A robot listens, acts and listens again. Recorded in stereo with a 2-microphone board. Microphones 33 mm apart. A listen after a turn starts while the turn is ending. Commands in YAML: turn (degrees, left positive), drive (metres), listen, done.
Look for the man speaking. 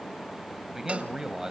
turn: -20
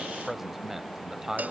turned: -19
turn: -15
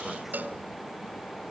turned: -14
listen: true
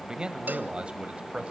turn: -40
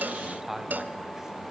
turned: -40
turn: -10
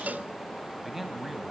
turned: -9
done: "Found it: a man speaking, straight ahead, 2 to 4 m away."